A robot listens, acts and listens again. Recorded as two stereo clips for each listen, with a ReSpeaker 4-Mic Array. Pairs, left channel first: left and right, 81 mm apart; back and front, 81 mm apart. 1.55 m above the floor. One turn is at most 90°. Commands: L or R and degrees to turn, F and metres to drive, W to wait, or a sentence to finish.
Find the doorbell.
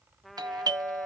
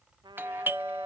R60
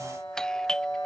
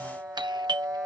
L10
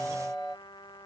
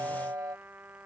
Facing the doorbell.